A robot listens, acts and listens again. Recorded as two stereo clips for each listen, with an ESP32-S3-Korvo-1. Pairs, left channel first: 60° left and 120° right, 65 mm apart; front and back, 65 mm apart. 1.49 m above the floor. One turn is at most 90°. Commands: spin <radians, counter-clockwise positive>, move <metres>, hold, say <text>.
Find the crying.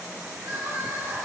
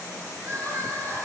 spin -1.57
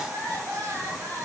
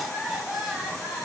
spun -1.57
spin -1.57
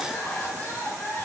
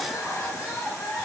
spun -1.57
say Facing the crying, 2 to 4 m away.